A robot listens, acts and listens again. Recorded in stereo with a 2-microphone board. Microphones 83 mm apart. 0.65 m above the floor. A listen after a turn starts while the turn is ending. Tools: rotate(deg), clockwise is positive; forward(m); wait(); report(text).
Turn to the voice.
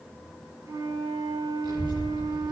rotate(65)
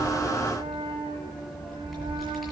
report("Found it: a child speaking, straight ahead, over 4 m away.")